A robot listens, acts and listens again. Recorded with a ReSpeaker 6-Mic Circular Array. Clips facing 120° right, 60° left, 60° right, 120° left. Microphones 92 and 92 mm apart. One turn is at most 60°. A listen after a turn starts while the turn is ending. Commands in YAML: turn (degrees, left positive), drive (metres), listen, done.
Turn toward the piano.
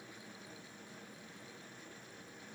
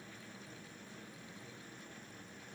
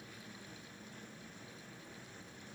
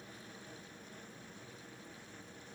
listen: true
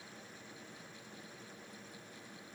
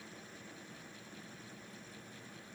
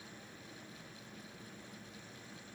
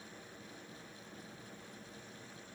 listen: true
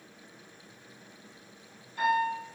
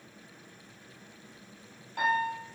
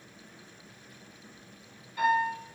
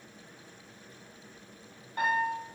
turn: 60
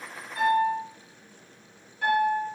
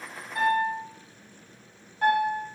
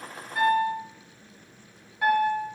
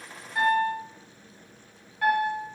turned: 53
turn: 20
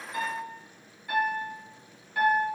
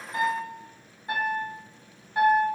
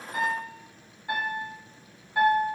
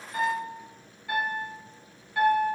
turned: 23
done: "Found it: a piano, straight ahead, 1 to 2 m away."